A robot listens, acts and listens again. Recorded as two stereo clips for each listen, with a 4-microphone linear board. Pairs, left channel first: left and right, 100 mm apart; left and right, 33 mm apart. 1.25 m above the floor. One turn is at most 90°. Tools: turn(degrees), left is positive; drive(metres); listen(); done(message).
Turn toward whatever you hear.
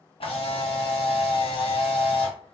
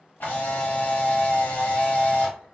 turn(degrees=60)
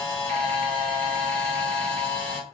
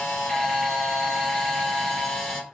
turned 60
turn(degrees=15)
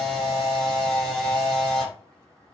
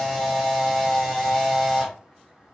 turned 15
done("Found it: a camera shutter, straight ahead.")